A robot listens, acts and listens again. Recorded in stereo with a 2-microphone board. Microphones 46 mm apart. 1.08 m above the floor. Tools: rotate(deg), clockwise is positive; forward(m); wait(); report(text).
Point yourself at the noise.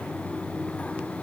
wait()
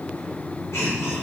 rotate(-65)
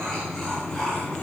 rotate(-10)
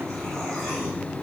wait()
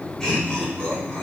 rotate(-15)
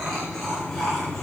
report("Facing the laughter, over 4 m away.")